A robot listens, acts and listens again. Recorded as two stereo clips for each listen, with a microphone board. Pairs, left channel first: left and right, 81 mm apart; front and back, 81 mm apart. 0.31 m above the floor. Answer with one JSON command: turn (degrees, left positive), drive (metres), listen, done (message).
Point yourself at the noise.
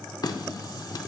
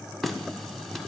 {"turn": 85}
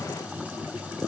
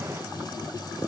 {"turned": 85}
{"turn": -20}
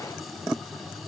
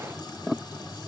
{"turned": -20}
{"done": "Found it: a running tap, straight ahead."}